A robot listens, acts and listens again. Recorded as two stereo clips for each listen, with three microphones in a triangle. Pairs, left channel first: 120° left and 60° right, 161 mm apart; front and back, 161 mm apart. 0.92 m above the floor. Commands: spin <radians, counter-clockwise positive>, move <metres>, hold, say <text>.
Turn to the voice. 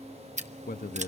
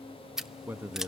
spin 1.83
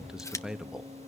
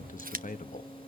spin 0.44
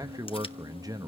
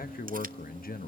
say Facing the man speaking.